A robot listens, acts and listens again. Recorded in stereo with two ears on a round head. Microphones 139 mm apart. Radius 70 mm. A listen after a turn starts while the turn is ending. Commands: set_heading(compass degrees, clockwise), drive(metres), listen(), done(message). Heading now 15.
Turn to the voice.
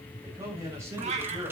set_heading(30)
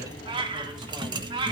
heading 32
listen()
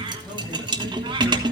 listen()
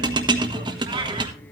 done("I heard a man speaking, but can't make it out now. It was about straight ahead or 145° right.")